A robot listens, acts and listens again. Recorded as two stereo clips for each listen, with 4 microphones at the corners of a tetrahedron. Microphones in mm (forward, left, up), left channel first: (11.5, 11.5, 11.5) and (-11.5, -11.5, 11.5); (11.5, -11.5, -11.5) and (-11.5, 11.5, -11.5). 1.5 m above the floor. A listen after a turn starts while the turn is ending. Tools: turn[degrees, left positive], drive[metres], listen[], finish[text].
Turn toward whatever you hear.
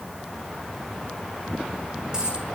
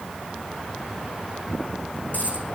Thought: The dropped coin: 65° right.
Action: turn[-65]
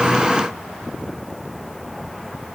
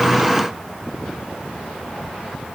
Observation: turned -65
Action: finish[Facing where the dropped coin came from. I can't hear it now.]